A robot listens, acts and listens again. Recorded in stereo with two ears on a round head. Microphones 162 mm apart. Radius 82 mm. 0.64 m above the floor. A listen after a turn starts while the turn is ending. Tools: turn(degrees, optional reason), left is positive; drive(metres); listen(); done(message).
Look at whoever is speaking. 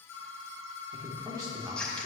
turn(degrees=-20, reason="The man speaking: about 20° right or 160° right.")
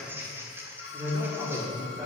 turn(degrees=-30)
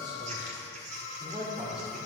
turn(degrees=-25, reason="The man speaking: about 25° right or 155° right.")
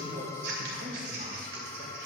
turn(degrees=-135, reason="So it is at 135° right.")
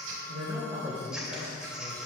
turn(degrees=-25, reason="The man speaking is now 25° right.")
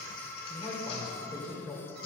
turn(degrees=10, reason="The man speaking is now 10° left.")
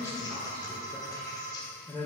done("Facing the man speaking.")